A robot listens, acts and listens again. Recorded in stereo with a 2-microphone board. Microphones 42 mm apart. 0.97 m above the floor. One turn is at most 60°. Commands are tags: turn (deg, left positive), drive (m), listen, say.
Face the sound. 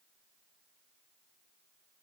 <listen/>
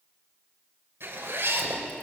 <turn deg="-60"/>
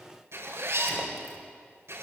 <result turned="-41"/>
<turn deg="-60"/>
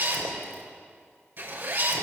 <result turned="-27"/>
<turn deg="-55"/>
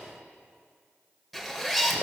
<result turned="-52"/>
<say>Found it: a zipper, straight ahead.</say>